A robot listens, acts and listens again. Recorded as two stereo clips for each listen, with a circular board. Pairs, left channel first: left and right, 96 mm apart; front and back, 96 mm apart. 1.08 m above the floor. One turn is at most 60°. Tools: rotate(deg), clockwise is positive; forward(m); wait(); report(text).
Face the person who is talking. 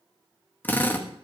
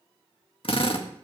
wait()
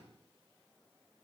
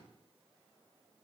wait()
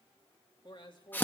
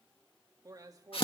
rotate(-60)
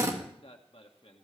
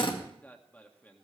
rotate(-60)
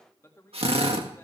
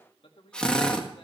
rotate(-25)
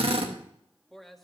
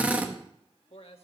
report("Found it: a man speaking, straight ahead, 1 to 2 m away.")